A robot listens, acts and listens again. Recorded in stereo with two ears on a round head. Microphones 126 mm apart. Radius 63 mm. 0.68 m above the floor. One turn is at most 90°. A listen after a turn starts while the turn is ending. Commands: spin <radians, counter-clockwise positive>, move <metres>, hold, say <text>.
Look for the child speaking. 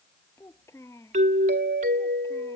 spin 0.35
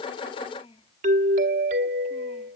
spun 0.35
spin 1.57
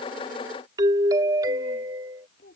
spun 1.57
spin 1.40
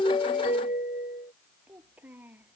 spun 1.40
spin -0.17
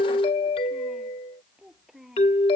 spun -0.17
say Found it: a child speaking, straight ahead.